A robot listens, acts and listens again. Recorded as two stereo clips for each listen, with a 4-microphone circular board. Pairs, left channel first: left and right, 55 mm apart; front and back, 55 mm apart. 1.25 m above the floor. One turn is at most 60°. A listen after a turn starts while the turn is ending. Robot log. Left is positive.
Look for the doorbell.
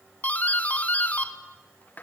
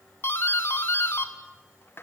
note: The doorbell: 35° left.
cmd yaw +35
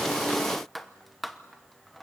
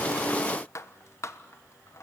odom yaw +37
end: Found it: a doorbell, straight ahead, 1 to 2 m away.